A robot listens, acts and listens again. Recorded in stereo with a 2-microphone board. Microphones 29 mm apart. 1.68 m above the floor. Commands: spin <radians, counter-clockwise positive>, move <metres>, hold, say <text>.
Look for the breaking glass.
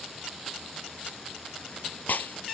spin 1.57
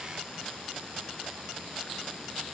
say I heard breaking glass from this way, but can't make it out now.